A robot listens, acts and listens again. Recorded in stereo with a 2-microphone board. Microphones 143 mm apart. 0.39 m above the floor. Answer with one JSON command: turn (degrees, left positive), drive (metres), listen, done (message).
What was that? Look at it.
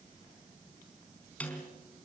{"turn": 30}
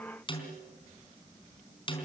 {"turn": 140}
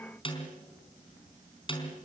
{"turn": 40}
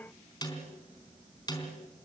{"turn": 30}
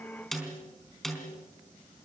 {"done": "Facing the snare drum, over 4 m away."}